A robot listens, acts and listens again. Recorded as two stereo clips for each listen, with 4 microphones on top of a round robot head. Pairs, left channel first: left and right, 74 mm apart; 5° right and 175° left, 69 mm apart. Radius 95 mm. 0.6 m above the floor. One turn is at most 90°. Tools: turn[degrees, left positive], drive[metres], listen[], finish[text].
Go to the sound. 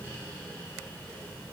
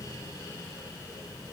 Action: listen[]
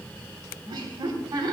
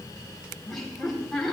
Thought: The laughter: 90° right.
Action: turn[-90]
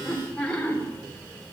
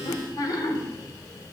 Thought: The laughter is now 15° left.
Action: turn[15]
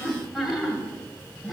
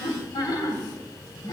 Action: drive[1.0]
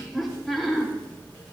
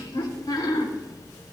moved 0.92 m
Action: drive[1.0]
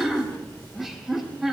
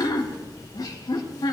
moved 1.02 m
Action: drive[1.0]
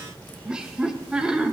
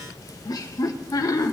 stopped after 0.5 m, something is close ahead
Thought: The laughter is now 15° right.
Action: turn[-15]
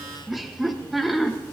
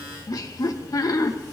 Action: finish[Arrived at the laughter, straight ahead.]